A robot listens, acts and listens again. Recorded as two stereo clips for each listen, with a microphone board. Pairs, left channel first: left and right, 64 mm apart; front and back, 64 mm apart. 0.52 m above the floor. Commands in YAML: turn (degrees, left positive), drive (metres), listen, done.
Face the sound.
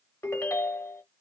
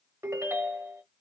turn: 135
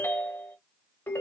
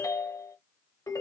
turn: 35
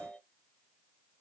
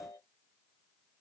done: "Found it: a ringtone, straight ahead, 1 to 2 m away."